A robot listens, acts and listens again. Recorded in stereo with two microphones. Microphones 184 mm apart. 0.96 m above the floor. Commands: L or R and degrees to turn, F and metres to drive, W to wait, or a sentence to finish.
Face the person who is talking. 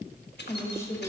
L15
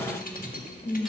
L145
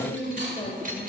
L45
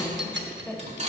Found it: a woman speaking, straight ahead, 1 to 2 m away.